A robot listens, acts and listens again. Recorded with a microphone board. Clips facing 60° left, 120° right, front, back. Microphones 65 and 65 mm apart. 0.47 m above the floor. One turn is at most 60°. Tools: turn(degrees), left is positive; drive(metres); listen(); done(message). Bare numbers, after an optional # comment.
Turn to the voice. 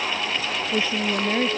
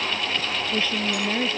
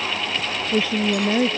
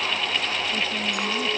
# The woman speaking: 10° right.
turn(-10)
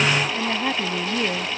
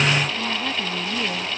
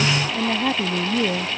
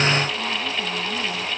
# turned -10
done("Found it: a woman speaking, straight ahead.")